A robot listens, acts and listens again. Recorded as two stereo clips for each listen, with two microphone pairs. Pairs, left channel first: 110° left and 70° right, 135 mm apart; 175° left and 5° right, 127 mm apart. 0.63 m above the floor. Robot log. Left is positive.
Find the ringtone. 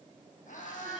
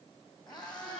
cmd idle
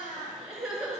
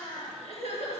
cmd idle
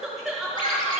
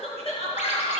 note: The ringtone: 160° left.
cmd yaw +160
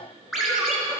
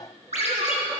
note: The ringtone is now 15° left.
cmd yaw +15
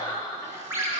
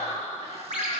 end: Facing the ringtone.